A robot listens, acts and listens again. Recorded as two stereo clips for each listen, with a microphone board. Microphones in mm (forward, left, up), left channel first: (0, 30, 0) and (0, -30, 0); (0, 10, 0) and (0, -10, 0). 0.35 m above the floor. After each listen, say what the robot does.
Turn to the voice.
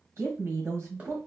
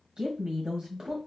Turn 50° right.
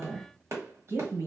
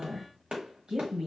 Turn 65° right.
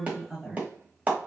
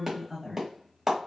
Found it: a woman speaking, straight ahead.